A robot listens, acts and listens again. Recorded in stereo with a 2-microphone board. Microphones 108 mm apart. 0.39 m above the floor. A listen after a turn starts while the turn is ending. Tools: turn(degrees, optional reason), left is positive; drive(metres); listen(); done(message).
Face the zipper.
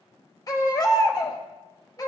listen()
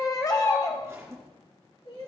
turn(degrees=-25, reason="The zipper: about 25° right or 155° right.")
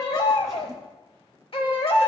done("Found it: a zipper, straight ahead, 2 to 4 m away.")